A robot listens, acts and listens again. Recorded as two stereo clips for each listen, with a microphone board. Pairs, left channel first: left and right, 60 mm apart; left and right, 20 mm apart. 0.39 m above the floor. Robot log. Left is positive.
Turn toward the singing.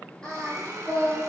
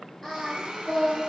note: The singing: about 15° left or 165° left.
cmd yaw +15
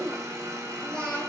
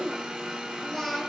note: The singing: about 20° left or 160° left.
cmd yaw +20
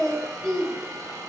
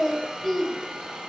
note: The singing: about 15° left or 165° left.
cmd yaw +15
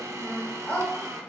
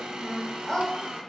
note: The singing: about 20° left or 160° left.
cmd yaw +20
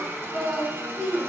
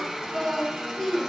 note: The singing: about 20° left or 160° left.
cmd yaw +20
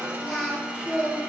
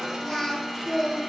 cmd yaw +30
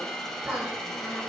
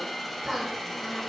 note: So it is at 25° right.
cmd yaw -25
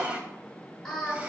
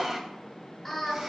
end: Facing the singing, 1 to 2 m away.